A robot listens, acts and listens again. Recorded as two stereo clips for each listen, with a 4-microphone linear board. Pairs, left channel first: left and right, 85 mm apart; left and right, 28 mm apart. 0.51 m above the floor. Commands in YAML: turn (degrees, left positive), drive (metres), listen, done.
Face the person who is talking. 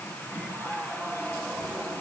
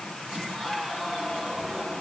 listen: true
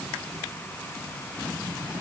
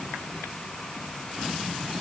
listen: true
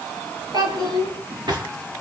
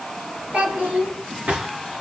turn: -55
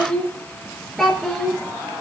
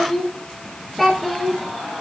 done: "Found it: a child speaking, straight ahead."